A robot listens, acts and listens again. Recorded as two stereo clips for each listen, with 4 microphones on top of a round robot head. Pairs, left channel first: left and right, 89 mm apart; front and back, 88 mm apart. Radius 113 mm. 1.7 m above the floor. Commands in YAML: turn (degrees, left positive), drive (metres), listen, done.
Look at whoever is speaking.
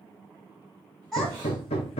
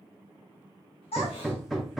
done: "Found it: a child speaking, straight ahead, 2 to 4 m away."